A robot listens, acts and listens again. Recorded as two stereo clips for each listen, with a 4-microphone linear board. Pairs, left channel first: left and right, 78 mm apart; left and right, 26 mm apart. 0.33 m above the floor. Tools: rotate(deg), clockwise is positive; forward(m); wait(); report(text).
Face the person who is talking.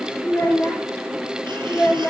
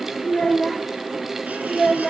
rotate(-20)
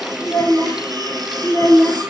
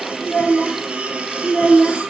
rotate(-35)
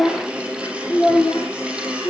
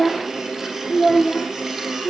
rotate(-120)
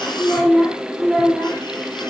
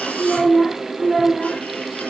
report("Found it: a child speaking, straight ahead.")